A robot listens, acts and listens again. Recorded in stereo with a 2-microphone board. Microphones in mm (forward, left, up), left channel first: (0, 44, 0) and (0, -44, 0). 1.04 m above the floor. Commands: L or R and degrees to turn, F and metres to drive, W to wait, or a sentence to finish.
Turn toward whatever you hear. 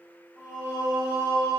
R40
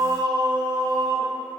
R40
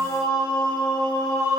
R40
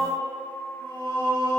R120
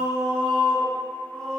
Found it: singing, straight ahead, 1 to 2 m away.